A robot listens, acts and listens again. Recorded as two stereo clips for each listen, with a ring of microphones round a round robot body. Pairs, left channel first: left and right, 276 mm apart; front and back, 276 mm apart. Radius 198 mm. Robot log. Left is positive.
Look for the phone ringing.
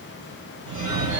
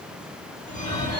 note: The phone ringing: 75° right.
cmd yaw -75
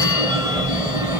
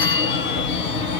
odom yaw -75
note: The phone ringing is now 10° right.
cmd yaw -10
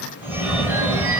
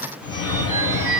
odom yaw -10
end: Found it: a phone ringing, straight ahead.